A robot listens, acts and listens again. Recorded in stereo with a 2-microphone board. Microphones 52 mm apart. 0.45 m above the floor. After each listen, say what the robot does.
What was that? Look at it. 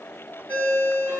Turn 35° right.
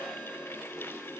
Keep listening.
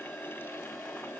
Keep listening.
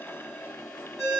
Facing the ringtone.